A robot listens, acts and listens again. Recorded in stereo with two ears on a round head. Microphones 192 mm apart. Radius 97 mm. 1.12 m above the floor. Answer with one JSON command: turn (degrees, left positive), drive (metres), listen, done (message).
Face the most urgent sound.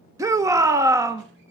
{"turn": -30}
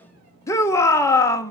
{"turn": 15}
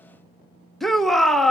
{"done": "Facing the shout."}